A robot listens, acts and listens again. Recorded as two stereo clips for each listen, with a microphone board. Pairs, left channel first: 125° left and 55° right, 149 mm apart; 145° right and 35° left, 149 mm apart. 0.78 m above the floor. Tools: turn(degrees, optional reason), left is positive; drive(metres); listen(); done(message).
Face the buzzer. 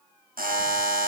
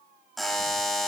turn(degrees=-55, reason="The buzzer: 55° right.")
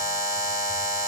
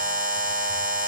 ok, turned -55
turn(degrees=10, reason="The buzzer is now 10° left.")
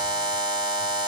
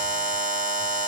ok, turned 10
done("Facing the buzzer, 1 to 2 m away.")